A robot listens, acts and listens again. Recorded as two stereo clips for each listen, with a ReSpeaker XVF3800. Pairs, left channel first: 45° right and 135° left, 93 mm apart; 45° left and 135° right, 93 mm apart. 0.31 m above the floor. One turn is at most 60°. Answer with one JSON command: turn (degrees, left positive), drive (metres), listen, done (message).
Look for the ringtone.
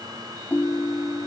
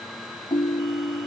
{"turn": 20}
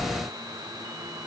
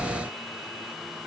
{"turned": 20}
{"listen": true}
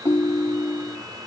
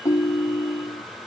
{"done": "Found it: a ringtone, straight ahead."}